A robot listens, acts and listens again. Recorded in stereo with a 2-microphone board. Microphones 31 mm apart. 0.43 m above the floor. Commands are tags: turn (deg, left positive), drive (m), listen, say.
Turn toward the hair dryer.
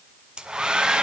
<turn deg="-30"/>
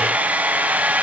<turn deg="-120"/>
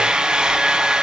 <turn deg="-25"/>
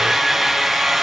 <say>Found it: a hair dryer, straight ahead, 1 to 2 m away.</say>